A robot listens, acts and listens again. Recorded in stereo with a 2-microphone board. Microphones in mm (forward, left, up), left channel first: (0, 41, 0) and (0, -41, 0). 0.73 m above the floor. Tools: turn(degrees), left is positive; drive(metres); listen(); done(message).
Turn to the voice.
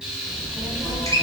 turn(degrees=-45)
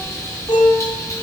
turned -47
turn(degrees=55)
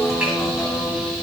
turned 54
listen()
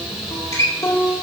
listen()
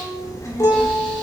turn(degrees=50)
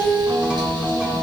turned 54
listen()
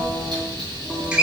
done("Found it: a child speaking, straight ahead, 2 to 4 m away.")